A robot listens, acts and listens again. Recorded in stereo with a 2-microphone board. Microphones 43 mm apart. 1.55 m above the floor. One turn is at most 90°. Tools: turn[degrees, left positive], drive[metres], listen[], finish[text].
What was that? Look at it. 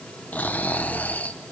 Thought: The snoring: about 40° left or 140° left.
Action: turn[40]
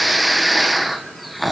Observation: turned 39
Action: finish[Facing the snoring, 1 to 2 m away.]